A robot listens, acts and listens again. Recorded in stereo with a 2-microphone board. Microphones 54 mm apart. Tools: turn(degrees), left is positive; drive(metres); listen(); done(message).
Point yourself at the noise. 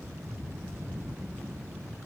listen()
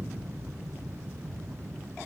listen()
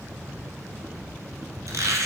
turn(degrees=-90)
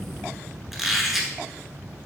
done("Facing the squeak.")